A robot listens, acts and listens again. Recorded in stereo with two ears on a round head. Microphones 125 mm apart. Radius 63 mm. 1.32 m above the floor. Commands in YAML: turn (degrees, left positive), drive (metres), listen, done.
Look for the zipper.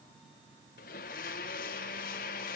listen: true
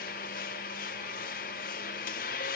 listen: true
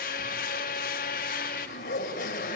turn: 70
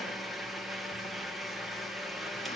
listen: true
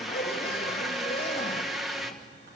turn: 40
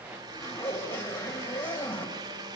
turn: 15
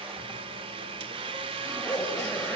done: "Facing the zipper."